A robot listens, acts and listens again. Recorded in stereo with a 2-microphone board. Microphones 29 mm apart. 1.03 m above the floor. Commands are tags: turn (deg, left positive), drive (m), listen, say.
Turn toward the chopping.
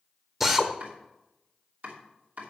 <turn deg="-90"/>
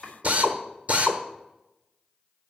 <turn deg="-10"/>
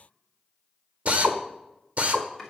<say>Facing the chopping.</say>